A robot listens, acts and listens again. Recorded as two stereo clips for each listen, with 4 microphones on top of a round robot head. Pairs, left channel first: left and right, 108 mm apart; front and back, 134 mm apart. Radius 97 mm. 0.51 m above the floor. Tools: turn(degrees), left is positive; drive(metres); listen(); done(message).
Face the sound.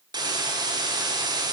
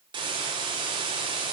turn(degrees=-130)
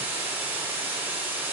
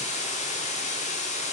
turn(degrees=-15)
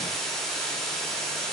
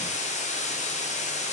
done("Found it: a hiss, straight ahead.")